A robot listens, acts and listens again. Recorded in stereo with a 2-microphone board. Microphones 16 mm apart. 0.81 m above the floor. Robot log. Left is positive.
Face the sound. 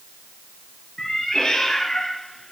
note: The cat meowing: about 60° left or 120° left.
cmd yaw +60
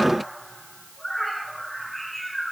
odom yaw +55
note: So it is at 15° left.
cmd yaw +15
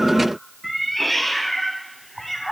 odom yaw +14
end: Facing the cat meowing.